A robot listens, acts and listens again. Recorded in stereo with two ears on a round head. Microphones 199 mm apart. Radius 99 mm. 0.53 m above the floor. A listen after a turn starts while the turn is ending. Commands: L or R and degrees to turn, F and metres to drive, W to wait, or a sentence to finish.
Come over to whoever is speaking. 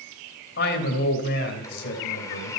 L50
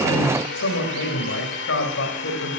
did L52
L70
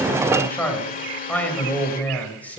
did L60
L10
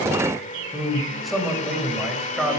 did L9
F1.0
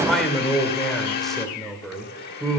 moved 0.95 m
F1.0
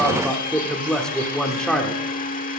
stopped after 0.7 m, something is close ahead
I am next to the man speaking.